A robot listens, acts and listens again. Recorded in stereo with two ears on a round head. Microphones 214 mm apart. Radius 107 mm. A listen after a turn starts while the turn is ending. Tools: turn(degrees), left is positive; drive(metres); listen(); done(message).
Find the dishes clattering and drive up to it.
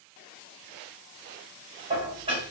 turn(degrees=-25)
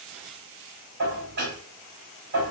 turn(degrees=-135)
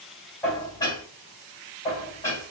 turn(degrees=15)
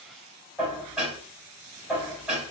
drive(metres=1.0)
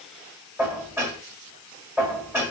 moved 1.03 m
turn(degrees=-10)
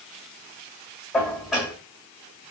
drive(metres=1.0)
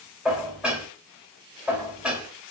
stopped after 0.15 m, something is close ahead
done("Arrived at the dishes clattering, straight ahead.")